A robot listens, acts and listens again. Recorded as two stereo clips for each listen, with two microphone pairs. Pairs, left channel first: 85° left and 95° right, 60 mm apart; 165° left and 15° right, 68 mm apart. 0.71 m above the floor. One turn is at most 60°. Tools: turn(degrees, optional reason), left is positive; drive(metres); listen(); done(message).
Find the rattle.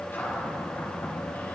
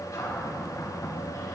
listen()
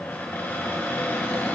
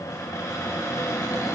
listen()
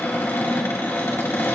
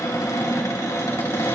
done("I can't make out a rattle to turn to.")